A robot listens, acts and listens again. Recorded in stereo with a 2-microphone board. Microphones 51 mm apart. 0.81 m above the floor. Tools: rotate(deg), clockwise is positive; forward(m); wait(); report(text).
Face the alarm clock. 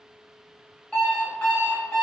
rotate(-25)
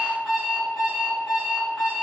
report("Facing the alarm clock.")